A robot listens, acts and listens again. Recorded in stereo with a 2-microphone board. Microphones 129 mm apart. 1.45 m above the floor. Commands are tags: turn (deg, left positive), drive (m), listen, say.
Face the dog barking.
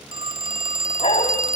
<turn deg="60"/>
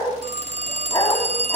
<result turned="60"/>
<turn deg="30"/>
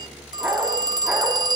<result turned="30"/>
<turn deg="-10"/>
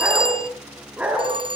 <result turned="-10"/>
<turn deg="-10"/>
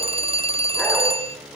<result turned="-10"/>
<listen/>
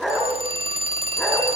<say>Facing the dog barking, over 4 m away.</say>